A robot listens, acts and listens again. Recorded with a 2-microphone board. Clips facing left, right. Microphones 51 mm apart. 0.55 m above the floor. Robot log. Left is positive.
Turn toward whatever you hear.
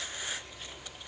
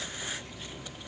cmd idle
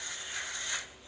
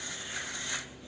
cmd idle
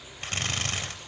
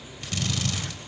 note: The drill: about 40° left or 140° left.
cmd yaw +40
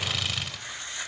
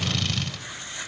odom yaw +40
end: Facing the drill, 2 to 4 m away.